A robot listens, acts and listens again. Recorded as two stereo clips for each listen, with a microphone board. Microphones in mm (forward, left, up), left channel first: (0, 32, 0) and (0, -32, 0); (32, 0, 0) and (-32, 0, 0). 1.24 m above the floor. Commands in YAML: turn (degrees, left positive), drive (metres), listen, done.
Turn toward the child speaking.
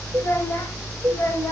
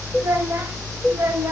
turn: 130
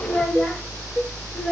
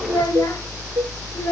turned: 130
done: "Found it: a child speaking, straight ahead, 2 to 4 m away."